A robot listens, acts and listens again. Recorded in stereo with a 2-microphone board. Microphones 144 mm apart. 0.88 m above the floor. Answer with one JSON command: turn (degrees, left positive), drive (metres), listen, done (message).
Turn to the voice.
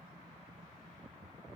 {"listen": true}
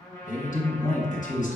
{"turn": 65}
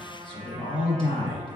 {"turn": 40}
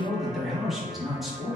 {"done": "Facing the man speaking."}